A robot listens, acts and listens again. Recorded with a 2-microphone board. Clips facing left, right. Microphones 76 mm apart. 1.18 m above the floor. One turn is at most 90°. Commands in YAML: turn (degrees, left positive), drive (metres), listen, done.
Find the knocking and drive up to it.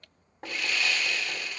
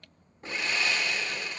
turn: 90
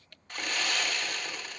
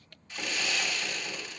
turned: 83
listen: true
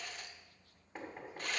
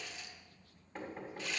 turn: 10
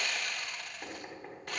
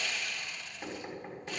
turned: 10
drive: 1.0
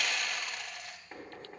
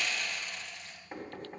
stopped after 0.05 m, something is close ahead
done: "Blocked. The knocking is further on, straight ahead."